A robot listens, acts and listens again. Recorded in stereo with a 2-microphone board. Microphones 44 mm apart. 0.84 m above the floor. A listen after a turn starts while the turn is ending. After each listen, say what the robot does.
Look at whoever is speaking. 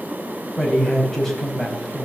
Turn 30° left.
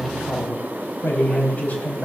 Turn 140° left.
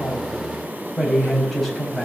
Facing the man speaking.